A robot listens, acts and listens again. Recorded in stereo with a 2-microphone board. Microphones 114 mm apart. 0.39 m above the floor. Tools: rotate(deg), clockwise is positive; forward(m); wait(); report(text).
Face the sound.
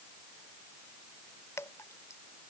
rotate(-25)
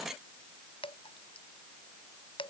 rotate(-130)
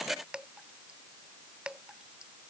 rotate(10)
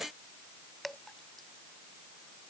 report("Facing the dripping.")